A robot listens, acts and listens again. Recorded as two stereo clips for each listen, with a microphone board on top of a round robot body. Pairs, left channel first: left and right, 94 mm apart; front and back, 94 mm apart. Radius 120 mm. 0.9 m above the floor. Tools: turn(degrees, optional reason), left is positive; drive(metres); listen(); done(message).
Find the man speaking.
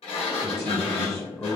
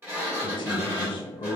turn(degrees=30, reason="The man speaking: 30° left.")
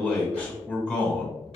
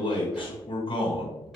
turn(degrees=15, reason="The man speaking is now 15° left.")
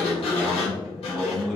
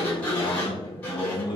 done("Found it: a man speaking, straight ahead, 1 to 2 m away.")